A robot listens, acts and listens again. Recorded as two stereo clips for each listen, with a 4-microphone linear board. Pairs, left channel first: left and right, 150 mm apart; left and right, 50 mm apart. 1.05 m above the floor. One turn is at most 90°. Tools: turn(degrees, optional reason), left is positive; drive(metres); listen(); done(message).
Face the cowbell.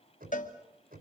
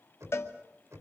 turn(degrees=60, reason="The cowbell: about 60° left or 120° left.")
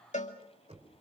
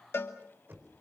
turn(degrees=55, reason="So it is at 55° left.")
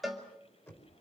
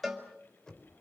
done("Found it: a cowbell, straight ahead.")